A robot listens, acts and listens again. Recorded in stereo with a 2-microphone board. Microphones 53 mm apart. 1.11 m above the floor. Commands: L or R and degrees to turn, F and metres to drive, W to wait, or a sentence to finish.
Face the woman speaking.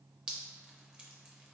W
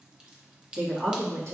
R60
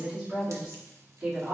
R15
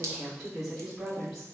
Found it: a woman speaking, straight ahead.